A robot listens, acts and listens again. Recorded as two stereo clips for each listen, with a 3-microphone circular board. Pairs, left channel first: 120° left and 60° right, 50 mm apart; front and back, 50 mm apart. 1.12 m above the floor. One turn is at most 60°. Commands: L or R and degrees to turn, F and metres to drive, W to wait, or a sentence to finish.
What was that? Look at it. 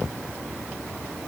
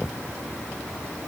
W
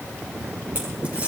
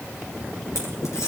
W
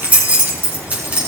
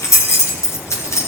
Facing the keys jangling, over 4 m away.